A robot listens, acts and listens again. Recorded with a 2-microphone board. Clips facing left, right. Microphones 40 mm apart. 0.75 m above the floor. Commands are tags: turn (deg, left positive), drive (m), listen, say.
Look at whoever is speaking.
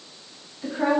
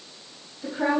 <turn deg="20"/>
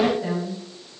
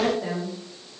<turn deg="30"/>
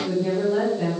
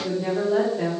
<turn deg="-35"/>
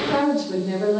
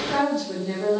<turn deg="10"/>
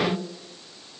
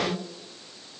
<say>Found it: a woman speaking, straight ahead, over 4 m away.</say>